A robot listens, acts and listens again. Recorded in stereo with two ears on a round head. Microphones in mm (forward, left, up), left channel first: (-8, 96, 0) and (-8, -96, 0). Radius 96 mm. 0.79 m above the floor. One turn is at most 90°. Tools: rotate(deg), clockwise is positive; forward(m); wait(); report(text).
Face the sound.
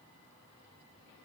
wait()
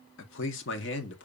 rotate(-55)
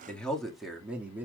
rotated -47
rotate(10)
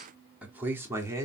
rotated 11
rotate(15)
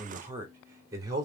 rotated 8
rotate(20)
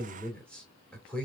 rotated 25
report("Found it: a man speaking, straight ahead.")